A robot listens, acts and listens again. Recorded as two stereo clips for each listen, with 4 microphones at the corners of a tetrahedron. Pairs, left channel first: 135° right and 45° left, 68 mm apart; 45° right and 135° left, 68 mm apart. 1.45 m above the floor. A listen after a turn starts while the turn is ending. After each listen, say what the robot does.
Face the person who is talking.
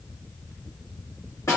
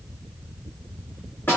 Keep listening.
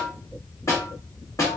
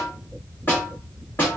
Keep listening.
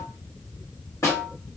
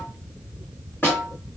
I can't make out anyone speaking, only a snare drum.